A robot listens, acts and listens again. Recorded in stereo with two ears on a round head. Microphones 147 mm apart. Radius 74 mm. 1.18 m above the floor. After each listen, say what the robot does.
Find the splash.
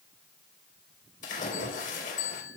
Turn 55° left.
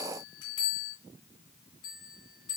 Keep listening.
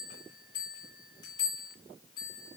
I heard a splash, but can't make it out now. It was about straight ahead or 70° left.